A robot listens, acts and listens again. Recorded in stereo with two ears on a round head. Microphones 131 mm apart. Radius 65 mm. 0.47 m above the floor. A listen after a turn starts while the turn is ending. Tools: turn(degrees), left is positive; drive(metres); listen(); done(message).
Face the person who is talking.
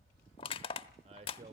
turn(degrees=-45)
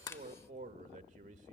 turn(degrees=-75)
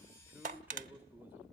turn(degrees=-15)
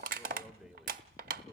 done("Found it: a man speaking, straight ahead, 1 to 2 m away.")